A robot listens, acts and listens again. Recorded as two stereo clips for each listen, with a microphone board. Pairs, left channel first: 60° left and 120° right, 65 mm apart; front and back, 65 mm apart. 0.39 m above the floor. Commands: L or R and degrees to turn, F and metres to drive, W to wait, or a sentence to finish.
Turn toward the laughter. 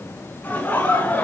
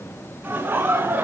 L125
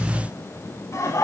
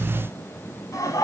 L25
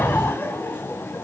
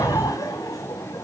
Found it: laughter, straight ahead, 2 to 4 m away.